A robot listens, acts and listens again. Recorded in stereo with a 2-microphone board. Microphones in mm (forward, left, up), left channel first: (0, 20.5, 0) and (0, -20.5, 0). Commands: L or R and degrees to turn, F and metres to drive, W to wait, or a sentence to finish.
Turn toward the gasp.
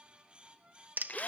W
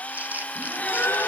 L70
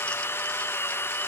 W
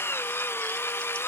I heard a gasp, but can't make it out now. It was about straight ahead or 40° left.